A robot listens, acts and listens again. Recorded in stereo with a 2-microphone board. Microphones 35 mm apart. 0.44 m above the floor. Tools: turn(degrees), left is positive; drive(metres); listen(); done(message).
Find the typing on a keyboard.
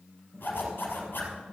turn(degrees=-35)
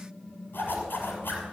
done("Facing the typing on a keyboard.")